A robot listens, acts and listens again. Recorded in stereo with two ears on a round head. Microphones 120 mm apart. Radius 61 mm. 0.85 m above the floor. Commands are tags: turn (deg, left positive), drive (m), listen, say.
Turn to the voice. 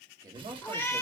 <turn deg="-30"/>
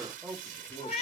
<say>Facing the man speaking.</say>